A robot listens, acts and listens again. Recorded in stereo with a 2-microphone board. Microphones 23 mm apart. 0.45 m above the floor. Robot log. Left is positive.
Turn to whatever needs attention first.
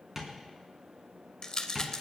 cmd idle
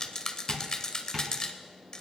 cmd idle
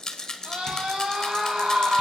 note: The scream: about 60° right or 120° right.
cmd yaw -60
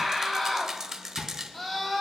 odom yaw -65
end: Found it: a scream, straight ahead.